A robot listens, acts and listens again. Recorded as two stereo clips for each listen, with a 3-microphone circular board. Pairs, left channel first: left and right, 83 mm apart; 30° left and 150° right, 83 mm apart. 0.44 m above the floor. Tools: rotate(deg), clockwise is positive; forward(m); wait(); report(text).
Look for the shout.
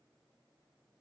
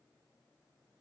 wait()
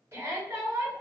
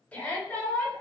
rotate(45)
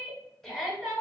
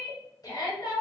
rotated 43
report("Found it: a shout, straight ahead.")